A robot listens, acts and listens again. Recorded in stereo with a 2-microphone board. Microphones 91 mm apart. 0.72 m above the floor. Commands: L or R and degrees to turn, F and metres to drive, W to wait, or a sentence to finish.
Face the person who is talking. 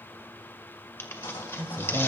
R25
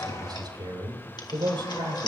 R120
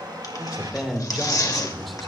Found it: a man speaking, straight ahead.